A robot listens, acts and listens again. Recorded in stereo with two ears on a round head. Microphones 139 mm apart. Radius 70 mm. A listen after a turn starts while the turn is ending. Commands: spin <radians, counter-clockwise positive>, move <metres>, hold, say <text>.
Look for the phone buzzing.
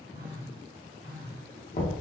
spin -1.05
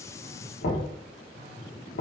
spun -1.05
spin -0.96
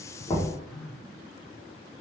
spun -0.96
say Facing the phone buzzing.